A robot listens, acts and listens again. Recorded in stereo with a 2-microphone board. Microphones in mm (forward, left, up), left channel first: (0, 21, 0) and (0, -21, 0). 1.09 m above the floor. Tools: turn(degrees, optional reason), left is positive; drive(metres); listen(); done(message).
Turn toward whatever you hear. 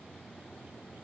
listen()
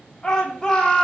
turn(degrees=20, reason="The shout: about 20° left or 160° left.")
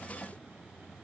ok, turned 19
listen()
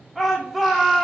done("Found it: a shout, straight ahead.")